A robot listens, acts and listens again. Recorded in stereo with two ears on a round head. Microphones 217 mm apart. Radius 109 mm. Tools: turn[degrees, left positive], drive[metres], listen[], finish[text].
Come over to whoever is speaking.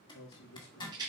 Action: turn[90]
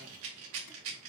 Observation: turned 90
Action: listen[]
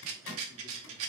Action: listen[]
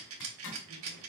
Action: finish[I heard a man speaking from this way, but can't make it out now. I did not reach it.]